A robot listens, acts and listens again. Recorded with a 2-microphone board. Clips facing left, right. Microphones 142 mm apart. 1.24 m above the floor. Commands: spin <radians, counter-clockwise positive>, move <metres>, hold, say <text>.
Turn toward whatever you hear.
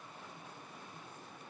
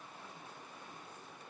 hold
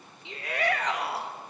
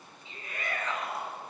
spin 1.31
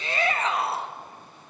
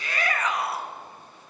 spin 0.52
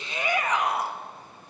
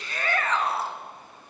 spin 0.26
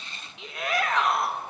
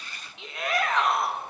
say Facing the shout, 2 to 4 m away.